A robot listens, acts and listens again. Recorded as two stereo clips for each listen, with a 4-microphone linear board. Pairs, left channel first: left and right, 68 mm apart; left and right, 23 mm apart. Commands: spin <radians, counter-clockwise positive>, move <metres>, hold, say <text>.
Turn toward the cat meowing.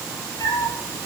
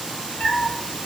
spin 1.22
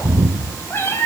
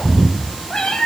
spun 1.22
spin 0.61
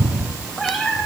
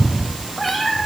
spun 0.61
say Facing the cat meowing.